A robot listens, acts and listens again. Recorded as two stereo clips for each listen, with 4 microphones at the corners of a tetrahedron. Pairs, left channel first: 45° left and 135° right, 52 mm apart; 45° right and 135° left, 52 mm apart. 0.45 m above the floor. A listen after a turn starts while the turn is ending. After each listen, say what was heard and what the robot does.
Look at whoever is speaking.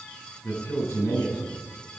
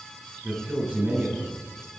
The man speaking: 75° left. Turn 75° left.
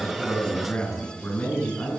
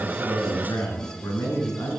The man speaking is now 15° right. Turn 15° right.
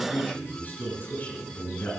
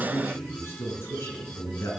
Facing the man speaking.